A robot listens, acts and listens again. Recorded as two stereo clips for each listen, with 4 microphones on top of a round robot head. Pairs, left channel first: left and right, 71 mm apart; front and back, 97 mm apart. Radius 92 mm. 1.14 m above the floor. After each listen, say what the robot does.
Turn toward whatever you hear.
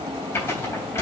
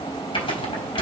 Turn 30° left.
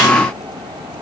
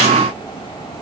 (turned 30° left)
Keep listening.
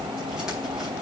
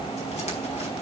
Keep listening.
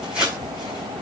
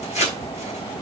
Facing the tearing paper.